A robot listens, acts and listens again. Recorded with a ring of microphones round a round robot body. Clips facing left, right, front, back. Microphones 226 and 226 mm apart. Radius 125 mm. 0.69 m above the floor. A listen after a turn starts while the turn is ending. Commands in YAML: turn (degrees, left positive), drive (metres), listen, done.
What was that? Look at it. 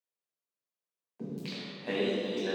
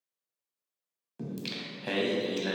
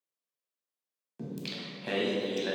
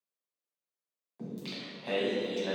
turn: -65
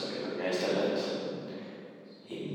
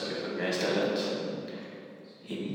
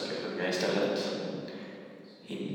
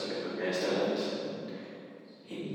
turn: -35
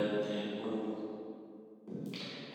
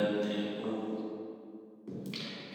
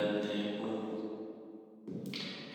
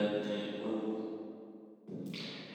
turn: -25
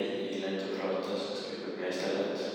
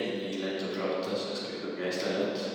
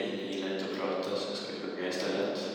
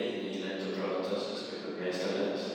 turn: -10
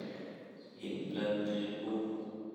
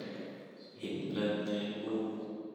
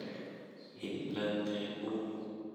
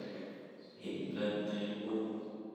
done: "Facing the singing."